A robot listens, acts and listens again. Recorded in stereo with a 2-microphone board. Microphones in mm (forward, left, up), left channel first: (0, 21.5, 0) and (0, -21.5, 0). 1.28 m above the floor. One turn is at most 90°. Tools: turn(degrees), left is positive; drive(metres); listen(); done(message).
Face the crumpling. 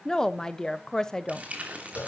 turn(degrees=-35)
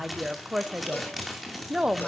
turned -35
done("Found it: crumpling, straight ahead.")